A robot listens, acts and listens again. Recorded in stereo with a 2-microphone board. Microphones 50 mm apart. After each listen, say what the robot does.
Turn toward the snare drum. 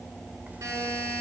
Keep listening.
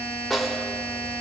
Turn 30° left.
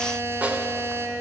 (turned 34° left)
Turn 35° right.
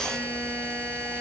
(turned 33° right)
Keep listening.
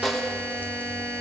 Facing the snare drum.